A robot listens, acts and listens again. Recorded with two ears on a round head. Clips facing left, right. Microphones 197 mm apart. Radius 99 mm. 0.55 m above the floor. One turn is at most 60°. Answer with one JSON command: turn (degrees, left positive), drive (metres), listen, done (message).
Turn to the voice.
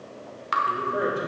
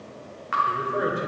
{"turn": 30}
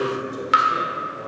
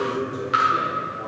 {"turn": 60}
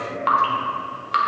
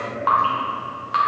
{"turn": 60}
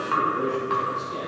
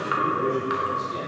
{"done": "Facing the man speaking, 2 to 4 m away."}